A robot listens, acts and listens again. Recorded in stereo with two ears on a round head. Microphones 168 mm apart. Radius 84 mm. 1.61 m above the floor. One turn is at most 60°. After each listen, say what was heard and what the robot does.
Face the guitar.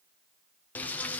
Keep listening.
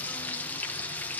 Keep listening.
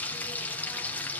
I can't make out a guitar to turn to.